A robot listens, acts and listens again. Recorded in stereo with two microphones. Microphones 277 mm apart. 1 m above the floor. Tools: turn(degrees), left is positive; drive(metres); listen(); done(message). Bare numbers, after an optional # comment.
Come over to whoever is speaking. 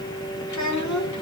turn(90)
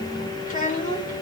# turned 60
# So it is at 30° left.
turn(30)
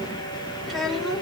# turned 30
drive(1.0)
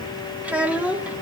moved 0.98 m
drive(1.0)
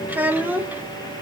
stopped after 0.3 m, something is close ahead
done("Arrived at the child speaking, straight ahead.")